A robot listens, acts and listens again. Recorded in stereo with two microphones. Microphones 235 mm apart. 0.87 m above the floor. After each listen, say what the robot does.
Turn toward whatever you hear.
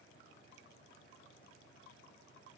Keep listening.
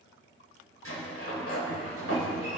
Turn 70° left.
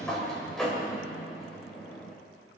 Facing the sliding door.